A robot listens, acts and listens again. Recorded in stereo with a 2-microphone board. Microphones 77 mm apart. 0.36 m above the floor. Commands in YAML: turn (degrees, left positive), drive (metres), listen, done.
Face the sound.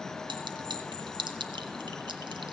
turn: -90
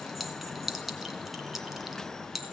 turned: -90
done: "Found it: a clink, straight ahead."